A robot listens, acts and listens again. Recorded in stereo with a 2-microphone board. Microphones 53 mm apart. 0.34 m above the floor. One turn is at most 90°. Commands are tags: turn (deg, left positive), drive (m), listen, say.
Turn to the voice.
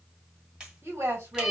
<turn deg="-60"/>
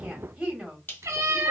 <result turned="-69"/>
<turn deg="-15"/>
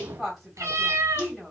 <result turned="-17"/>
<say>Facing the woman speaking, 1 to 2 m away.</say>